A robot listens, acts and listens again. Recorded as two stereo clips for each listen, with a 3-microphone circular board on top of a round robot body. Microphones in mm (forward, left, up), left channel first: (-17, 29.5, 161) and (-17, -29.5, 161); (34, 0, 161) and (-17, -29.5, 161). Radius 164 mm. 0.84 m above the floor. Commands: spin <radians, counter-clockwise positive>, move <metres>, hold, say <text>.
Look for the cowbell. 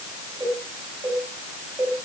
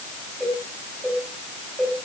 spin -1.40
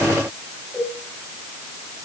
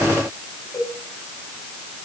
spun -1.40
spin -0.17
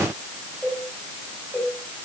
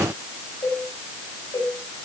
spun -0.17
say Facing the cowbell, over 4 m away.